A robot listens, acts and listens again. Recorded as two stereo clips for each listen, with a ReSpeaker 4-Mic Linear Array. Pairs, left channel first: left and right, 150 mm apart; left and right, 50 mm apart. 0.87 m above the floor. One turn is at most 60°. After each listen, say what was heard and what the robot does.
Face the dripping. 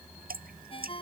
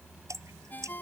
Turn 60° right.
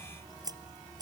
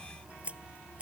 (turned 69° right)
So it is at 25° right. Turn 25° right.
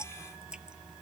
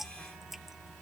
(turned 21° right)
Found it: dripping, straight ahead.